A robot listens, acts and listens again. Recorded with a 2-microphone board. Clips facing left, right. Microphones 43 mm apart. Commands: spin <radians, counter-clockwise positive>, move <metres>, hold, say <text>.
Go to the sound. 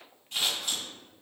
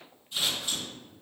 spin 1.57
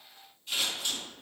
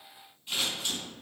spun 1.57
spin -0.17
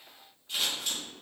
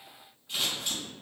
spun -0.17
move 1.0
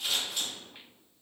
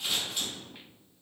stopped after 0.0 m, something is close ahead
say Blocked. The scissors is further on, straight ahead.